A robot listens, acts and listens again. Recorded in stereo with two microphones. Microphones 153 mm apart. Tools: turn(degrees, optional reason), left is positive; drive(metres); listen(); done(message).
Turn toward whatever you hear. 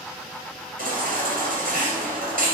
turn(degrees=-65, reason="The baby crying: about 65° right or 115° right.")
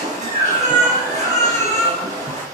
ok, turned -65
turn(degrees=-50, reason="So it is at 50° right.")
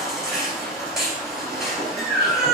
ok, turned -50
done("Found it: a baby crying, straight ahead, 2 to 4 m away.")